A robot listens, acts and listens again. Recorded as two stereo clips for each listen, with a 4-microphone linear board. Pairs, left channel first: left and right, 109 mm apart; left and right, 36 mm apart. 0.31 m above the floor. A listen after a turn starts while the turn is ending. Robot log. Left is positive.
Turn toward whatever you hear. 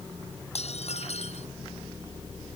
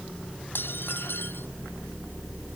cmd yaw +90
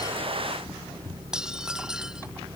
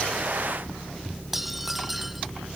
end: Facing the dishes clattering.